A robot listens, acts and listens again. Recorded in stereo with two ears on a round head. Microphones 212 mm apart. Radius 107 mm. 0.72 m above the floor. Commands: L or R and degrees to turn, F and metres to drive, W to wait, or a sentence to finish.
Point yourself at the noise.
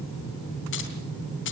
L50
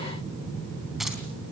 W
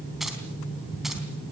Found it: keys jangling, straight ahead, 2 to 4 m away.